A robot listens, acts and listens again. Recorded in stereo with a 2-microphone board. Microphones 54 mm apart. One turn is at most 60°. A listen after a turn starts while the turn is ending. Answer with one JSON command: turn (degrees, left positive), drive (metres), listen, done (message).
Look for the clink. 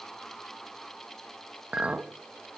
{"turn": -25}
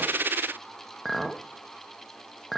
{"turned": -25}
{"done": "Facing the clink, 1 to 2 m away."}